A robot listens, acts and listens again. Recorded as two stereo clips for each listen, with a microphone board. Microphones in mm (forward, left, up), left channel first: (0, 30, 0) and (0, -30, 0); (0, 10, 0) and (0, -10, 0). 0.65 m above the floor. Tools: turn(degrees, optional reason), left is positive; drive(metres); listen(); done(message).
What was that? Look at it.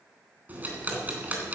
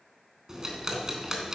turn(degrees=-30, reason="The ticking: about 30° right or 150° right.")
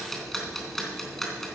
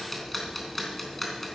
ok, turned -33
done("Found it: ticking, straight ahead.")